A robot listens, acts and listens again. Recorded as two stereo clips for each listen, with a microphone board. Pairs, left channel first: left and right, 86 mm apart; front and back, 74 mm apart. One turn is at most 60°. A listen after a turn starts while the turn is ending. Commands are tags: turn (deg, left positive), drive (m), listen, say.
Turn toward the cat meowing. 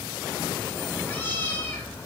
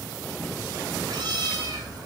<turn deg="60"/>
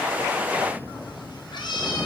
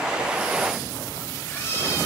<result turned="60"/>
<turn deg="60"/>
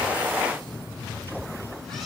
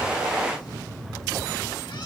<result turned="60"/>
<say>Found it: a cat meowing, straight ahead.</say>